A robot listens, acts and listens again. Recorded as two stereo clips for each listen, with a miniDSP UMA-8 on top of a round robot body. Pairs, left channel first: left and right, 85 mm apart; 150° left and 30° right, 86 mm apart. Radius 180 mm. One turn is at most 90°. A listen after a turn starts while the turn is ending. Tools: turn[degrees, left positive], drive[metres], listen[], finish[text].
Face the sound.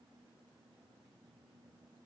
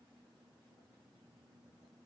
Action: listen[]
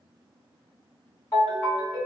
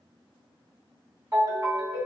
Thought: The ringtone: 30° left.
Action: turn[30]
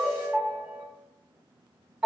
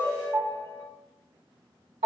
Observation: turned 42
Thought: The ringtone is now 10° right.
Action: turn[-10]
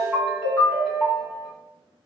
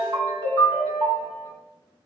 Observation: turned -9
Action: finish[Facing the ringtone, 1 to 2 m away.]